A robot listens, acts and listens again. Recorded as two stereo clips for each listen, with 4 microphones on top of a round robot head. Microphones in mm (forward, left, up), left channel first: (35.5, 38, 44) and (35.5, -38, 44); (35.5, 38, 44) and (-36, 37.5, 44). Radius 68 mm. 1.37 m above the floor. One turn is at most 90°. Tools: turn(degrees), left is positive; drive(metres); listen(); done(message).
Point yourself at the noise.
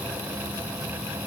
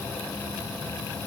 listen()
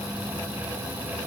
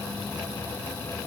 listen()
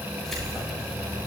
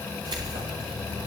turn(degrees=90)
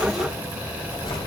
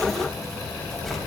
turn(degrees=90)
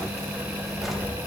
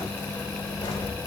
done("Facing the keys jangling.")